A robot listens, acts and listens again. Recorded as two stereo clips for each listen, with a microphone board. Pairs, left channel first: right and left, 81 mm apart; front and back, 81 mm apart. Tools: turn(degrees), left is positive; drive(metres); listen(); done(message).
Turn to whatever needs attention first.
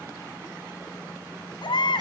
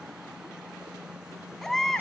turn(degrees=-85)
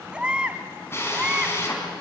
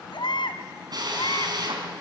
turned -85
turn(degrees=15)
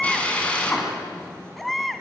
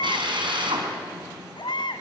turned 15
done("Facing the baby crying, 1 to 2 m away.")